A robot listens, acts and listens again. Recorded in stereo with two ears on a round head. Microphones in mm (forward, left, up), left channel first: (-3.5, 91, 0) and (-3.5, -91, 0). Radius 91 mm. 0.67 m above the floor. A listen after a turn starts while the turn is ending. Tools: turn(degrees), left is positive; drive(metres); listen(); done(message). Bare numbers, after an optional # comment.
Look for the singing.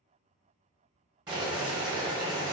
listen()
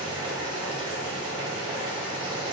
listen()
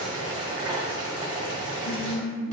# The singing: about 55° left or 125° left.
turn(55)
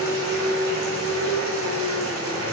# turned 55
# So it is at 65° left.
turn(65)
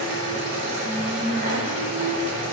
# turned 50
# The singing is now 20° left.
turn(20)
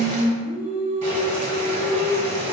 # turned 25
done("Found it: singing, straight ahead.")